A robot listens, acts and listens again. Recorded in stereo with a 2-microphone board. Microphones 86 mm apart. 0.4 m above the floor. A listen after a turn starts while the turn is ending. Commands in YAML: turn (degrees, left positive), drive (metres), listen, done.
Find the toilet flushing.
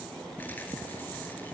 listen: true
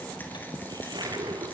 turn: -50
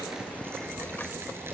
listen: true
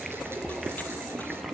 done: "Facing the toilet flushing, 2 to 4 m away."